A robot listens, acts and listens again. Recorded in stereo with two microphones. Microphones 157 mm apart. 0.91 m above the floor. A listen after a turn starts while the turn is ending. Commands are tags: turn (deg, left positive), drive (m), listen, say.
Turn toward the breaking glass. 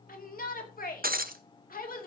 <turn deg="-70"/>
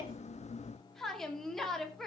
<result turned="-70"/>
<listen/>
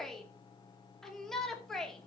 <say>I heard breaking glass, but can't make it out now. It was about straight ahead or 40° right.</say>